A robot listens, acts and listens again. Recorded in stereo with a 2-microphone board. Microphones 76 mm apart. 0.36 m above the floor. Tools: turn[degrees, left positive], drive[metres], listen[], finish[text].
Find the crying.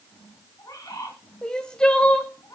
Action: turn[30]
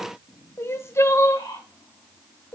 Thought: So it is at 140° left.
Action: turn[140]
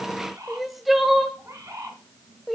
Action: finish[Found it: crying, straight ahead, 1 to 2 m away.]